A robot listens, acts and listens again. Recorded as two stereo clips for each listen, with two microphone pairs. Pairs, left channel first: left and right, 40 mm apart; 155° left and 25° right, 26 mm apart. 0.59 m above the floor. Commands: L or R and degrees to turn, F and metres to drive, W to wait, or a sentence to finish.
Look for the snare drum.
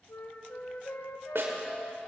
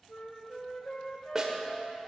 R95
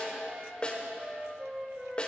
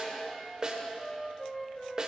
L25
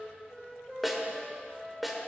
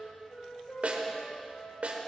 Found it: a snare drum, straight ahead.